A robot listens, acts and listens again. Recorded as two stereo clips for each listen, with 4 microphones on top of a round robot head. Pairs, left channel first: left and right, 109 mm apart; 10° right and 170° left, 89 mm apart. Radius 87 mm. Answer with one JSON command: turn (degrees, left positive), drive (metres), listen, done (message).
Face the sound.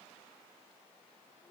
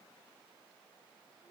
{"listen": true}
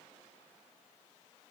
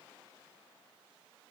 {"listen": true}
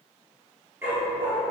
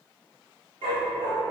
{"turn": -165}
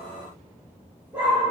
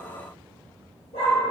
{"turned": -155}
{"turn": -10}
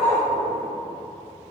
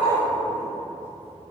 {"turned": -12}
{"done": "Facing the dog barking, over 4 m away."}